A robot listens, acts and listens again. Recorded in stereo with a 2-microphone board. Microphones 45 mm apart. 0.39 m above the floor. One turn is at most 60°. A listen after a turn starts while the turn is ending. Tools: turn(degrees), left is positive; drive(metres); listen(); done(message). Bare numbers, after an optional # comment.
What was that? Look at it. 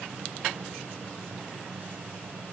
listen()
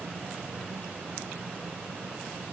listen()
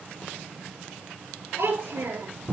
turn(-60)
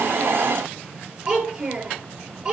# So it is at 25° right.
turn(-25)
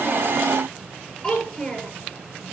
# The child speaking is now 10° left.
turn(10)
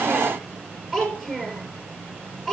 done("Found it: a child speaking, straight ahead, over 4 m away.")